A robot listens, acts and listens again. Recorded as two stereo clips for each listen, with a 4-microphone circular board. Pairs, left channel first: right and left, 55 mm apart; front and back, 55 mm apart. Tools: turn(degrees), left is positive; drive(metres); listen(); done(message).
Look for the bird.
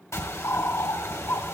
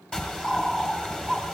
turn(degrees=-70)
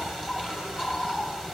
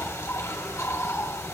turn(degrees=15)
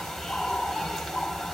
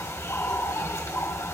done("Found it: a bird, straight ahead, 1 to 2 m away.")